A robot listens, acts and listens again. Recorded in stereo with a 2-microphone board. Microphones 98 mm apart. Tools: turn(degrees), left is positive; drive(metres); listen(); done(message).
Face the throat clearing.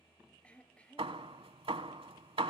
turn(degrees=30)
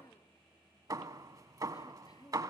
turn(degrees=135)
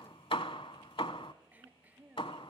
turn(degrees=-15)
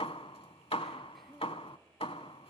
listen()
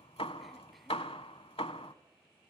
listen()
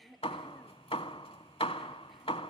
done("Facing the throat clearing.")